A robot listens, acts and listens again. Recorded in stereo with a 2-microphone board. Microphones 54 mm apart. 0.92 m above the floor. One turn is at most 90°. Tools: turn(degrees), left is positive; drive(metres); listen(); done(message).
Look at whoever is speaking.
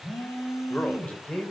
turn(degrees=25)
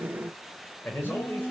turn(degrees=40)
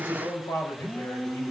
turn(degrees=90)
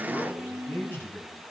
turn(degrees=40)
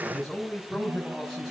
done("Found it: a man speaking, straight ahead.")